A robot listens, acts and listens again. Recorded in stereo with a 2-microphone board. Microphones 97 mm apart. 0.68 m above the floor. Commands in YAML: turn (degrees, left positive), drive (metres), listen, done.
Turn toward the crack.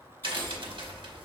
turn: -55
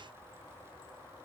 listen: true
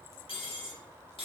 done: "I heard a crack, but can't make it out now. It was about straight ahead or 70° right."